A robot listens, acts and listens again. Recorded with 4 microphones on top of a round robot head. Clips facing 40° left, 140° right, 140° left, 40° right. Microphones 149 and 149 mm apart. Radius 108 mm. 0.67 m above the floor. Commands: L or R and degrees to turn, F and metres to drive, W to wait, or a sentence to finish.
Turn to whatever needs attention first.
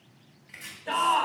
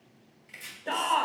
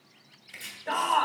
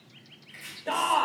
R100
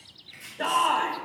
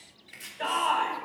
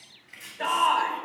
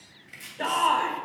Facing the shout.